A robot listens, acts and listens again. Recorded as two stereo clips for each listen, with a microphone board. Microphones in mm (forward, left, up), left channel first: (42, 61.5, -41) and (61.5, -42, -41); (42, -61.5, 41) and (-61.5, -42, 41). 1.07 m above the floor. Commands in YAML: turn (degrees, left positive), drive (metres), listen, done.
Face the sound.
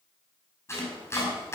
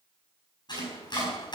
turn: 35
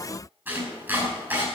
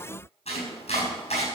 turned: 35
done: "Facing the chopping."